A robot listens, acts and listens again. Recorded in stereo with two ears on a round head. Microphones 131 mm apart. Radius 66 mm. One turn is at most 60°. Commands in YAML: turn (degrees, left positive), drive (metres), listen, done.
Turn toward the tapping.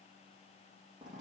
listen: true
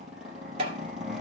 turn: -40
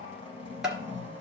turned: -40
done: "Found it: tapping, straight ahead, 1 to 2 m away."